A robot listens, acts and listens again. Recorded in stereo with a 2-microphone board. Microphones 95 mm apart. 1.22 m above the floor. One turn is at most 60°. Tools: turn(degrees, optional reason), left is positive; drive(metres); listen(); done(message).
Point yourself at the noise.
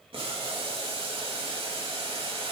turn(degrees=-60)
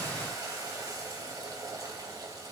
turn(degrees=-40, reason="So it is at 40° right.")
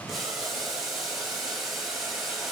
done("Found it: boiling, straight ahead, 2 to 4 m away.")